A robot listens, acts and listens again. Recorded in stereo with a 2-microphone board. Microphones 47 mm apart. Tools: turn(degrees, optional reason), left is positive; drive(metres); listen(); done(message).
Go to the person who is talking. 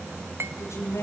turn(degrees=90)
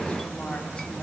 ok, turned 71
turn(degrees=20, reason="Nothing new. It was at 20° left.")
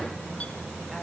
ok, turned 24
listen()
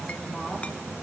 done("Facing where the woman speaking came from. I can't hear it now. I did not reach it.")